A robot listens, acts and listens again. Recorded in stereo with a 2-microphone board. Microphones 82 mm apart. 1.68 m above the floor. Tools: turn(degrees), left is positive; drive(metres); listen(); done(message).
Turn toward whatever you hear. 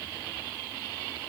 listen()
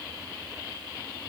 listen()
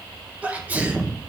turn(degrees=-20)
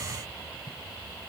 listen()
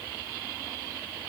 done("I heard a sneeze, but can't make it out now. It was about straight ahead or 140° right.")